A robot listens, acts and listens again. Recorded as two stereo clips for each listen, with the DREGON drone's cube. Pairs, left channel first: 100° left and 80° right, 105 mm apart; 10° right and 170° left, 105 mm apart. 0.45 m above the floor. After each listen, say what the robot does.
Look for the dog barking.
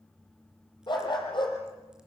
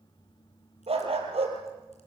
Turn 145° left.
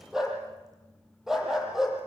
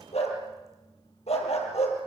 Found it: a dog barking, straight ahead.